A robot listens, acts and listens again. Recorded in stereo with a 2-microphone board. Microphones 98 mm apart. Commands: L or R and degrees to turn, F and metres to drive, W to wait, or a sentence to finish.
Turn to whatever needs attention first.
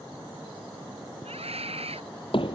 R90
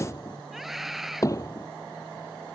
Facing the scream.